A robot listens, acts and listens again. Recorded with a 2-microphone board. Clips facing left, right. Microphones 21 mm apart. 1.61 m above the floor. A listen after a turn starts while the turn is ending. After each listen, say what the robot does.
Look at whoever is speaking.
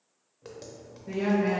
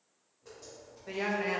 Turn 45° right.
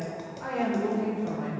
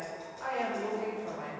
Found it: a woman speaking, straight ahead.